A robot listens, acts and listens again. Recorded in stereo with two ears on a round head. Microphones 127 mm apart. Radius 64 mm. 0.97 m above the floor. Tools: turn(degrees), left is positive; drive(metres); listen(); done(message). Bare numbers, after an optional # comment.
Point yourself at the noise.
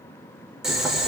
turn(-30)
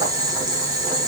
# So it is at 145° right.
turn(-145)
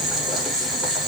done("Facing the boiling.")